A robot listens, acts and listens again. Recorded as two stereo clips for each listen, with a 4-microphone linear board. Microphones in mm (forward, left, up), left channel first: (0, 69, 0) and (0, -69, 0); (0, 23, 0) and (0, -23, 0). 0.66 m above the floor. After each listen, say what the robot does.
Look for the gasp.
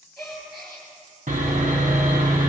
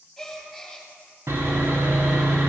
Turn 30° left.
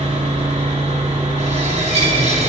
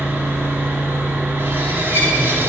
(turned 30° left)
Keep listening.
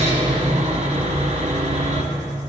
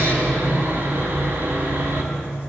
I heard a gasp, but can't make it out now. It was about 30° right or 150° left.